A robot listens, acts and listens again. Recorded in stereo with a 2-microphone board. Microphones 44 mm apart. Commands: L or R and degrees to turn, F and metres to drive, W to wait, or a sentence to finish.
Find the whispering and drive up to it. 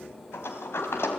W
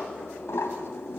W
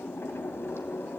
I can't make out whispering, only a sliding door.